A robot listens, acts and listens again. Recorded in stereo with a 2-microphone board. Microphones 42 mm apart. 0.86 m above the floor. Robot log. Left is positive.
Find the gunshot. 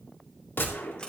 note: The gunshot: about 65° left or 115° left.
cmd yaw +65
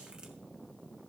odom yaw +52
cmd idle
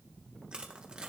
end: I heard a gunshot, but can't make it out now. It was about 10° left or 65° left.